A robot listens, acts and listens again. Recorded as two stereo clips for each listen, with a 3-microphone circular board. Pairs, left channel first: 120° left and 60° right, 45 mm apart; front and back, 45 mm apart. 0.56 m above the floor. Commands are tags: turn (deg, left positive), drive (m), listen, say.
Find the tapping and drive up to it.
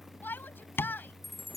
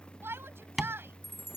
<turn deg="95"/>
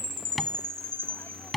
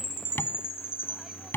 <turn deg="30"/>
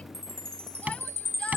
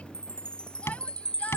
<drive m="1.0"/>
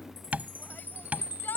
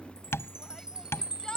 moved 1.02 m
<turn deg="-10"/>
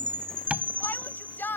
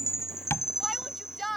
<drive m="1.0"/>
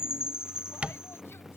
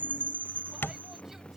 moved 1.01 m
<drive m="1.0"/>
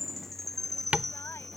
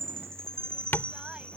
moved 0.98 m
<drive m="1.0"/>
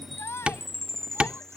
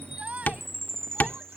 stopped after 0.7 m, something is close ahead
<turn deg="-10"/>
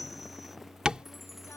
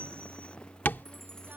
<say>I am next to the tapping.</say>